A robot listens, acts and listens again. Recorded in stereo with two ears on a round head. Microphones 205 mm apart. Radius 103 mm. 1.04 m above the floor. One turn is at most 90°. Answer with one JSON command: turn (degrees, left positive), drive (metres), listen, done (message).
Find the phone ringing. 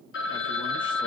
{"turn": 55}
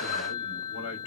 {"turn": 75}
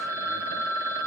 {"turn": -10}
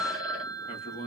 {"done": "Found it: a phone ringing, straight ahead, under 1 m away."}